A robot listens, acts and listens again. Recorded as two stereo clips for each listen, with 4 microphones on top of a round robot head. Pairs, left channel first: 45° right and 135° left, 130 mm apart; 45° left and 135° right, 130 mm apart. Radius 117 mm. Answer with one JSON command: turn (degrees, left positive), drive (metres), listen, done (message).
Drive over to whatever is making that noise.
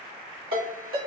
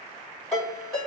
{"turn": 135}
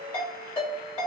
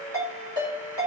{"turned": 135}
{"drive": 1.0}
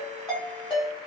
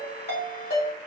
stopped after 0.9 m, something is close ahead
{"turn": 10}
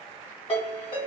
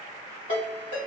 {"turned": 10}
{"done": "I am next to the ringtone."}